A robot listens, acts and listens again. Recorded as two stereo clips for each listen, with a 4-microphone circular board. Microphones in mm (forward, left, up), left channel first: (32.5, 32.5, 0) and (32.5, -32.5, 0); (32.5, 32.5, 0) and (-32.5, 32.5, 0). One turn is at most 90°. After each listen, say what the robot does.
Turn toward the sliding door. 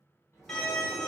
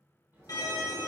Turn 90° left.
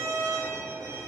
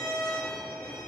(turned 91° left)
Turn 40° left.
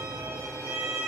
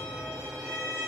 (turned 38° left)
Keep listening.
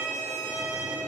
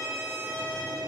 Facing where the sliding door came from. I can't hear it now.